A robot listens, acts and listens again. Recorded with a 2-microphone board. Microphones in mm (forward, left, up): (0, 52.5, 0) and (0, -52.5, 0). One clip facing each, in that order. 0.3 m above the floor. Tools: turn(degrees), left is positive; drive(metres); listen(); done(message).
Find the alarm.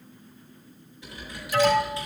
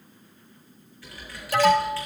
turn(degrees=-60)
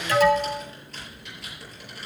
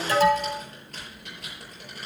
turn(degrees=-35)
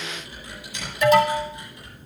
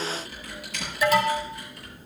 done("Facing the alarm.")